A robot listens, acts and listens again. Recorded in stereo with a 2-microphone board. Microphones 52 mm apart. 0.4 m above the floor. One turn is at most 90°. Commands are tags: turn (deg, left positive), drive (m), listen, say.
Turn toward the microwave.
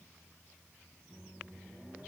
<turn deg="-20"/>
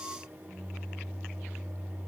<turn deg="-90"/>
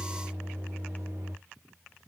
<turn deg="-80"/>
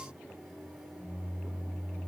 <say>Found it: a microwave, straight ahead, 2 to 4 m away.</say>